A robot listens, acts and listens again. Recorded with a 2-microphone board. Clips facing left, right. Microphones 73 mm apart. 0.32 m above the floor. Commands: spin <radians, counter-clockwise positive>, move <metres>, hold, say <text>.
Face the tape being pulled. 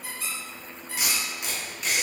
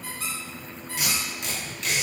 spin 0.52
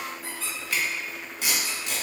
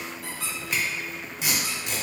spin -0.35
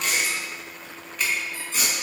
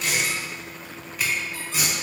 spin -0.17
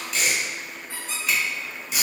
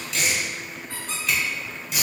say Found it: tape being pulled, straight ahead.